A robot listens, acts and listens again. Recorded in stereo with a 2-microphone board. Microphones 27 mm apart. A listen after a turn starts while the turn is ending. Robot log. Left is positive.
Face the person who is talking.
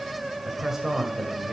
cmd yaw -30
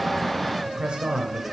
note: So it is at 135° right.
cmd yaw -135
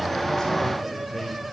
cmd idle
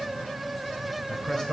note: The man speaking is now 35° left.
cmd yaw +35
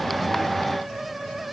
cmd idle
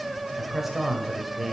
note: The man speaking is now 10° right.
cmd yaw -10
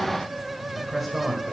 end: Facing the man speaking.